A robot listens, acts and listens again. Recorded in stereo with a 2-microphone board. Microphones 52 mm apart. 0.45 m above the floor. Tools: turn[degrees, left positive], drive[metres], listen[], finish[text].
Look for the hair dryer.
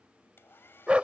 Thought: The hair dryer: about 50° left or 130° left.
Action: turn[50]
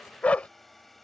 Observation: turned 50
Action: finish[Found it: a hair dryer, straight ahead.]